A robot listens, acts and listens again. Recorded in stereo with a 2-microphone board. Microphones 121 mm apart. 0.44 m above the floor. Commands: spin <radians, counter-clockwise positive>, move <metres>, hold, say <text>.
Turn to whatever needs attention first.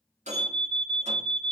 spin 0.52
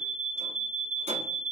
spin 2.62
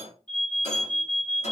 spin 0.17
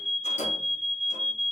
say Found it: an alarm, straight ahead.